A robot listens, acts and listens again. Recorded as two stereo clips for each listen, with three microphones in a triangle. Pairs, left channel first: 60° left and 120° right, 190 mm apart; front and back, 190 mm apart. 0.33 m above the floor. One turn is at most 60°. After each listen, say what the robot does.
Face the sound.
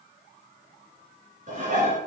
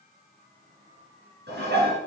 Turn 60° right.
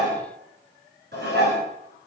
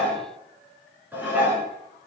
Turn 60° right.
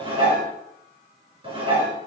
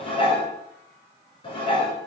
Turn 60° right.
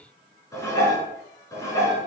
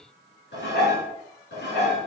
Turn 15° right.
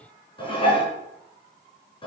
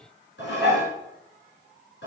Facing the dishes clattering.